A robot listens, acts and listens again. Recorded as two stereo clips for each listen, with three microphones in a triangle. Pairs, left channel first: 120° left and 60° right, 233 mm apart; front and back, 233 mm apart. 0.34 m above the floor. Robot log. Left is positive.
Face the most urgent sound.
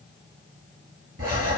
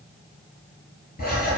cmd idle
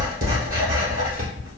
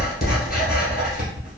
cmd idle
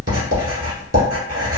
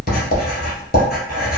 end: I can't make out anything urgent to turn to.